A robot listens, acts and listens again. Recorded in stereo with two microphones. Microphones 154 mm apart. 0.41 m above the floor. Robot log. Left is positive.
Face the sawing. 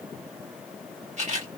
cmd idle
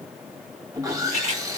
note: The sawing: about 25° right or 155° right.
cmd yaw -25
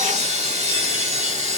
note: So it is at 130° right.
cmd yaw -130
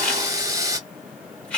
note: The sawing is now 25° right.
cmd yaw -25
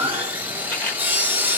note: The sawing is now 15° right.
cmd yaw -15
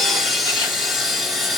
end: Found it: sawing, straight ahead.